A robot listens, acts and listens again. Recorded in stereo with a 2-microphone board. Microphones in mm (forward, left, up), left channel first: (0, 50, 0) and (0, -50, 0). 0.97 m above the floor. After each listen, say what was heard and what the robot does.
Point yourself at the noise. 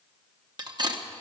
The cutlery clinking: about 45° right or 135° right. Turn 45° right.
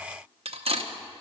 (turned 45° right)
So it is at 90° right. Turn 90° right.
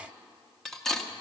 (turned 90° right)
Found it: cutlery clinking, straight ahead, under 1 m away.